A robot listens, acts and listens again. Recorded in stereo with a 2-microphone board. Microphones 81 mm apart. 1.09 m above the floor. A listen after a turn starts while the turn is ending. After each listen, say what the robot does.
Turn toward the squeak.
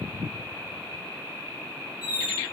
Turn 20° right.
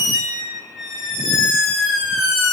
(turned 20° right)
Facing the squeak, 1 to 2 m away.